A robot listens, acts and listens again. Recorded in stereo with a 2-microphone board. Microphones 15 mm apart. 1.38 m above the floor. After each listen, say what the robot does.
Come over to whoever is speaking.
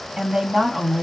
Turn 90° right.
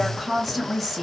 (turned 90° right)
Drive 1.0 m forward.
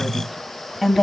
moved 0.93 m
Drive 1.0 m forward.
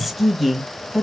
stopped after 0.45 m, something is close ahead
Turn 15° right.
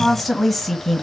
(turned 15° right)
Arrived at the woman speaking, straight ahead.